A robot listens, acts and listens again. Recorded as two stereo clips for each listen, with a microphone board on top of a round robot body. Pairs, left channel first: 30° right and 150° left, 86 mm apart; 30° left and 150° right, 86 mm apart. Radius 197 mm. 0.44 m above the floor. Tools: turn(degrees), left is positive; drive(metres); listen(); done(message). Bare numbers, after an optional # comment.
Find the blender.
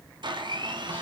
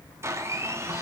# The blender: 155° left.
turn(155)
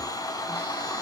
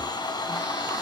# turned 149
done("Found it: a blender, straight ahead, 1 to 2 m away.")